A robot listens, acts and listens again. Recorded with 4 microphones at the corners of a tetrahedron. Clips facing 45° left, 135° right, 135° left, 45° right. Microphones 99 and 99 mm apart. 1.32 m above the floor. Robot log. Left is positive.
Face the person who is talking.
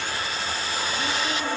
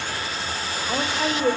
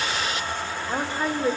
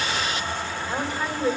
note: The woman speaking: 165° right.
cmd yaw -165
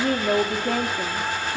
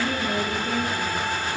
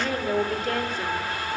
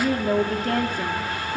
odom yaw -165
end: Facing the woman speaking.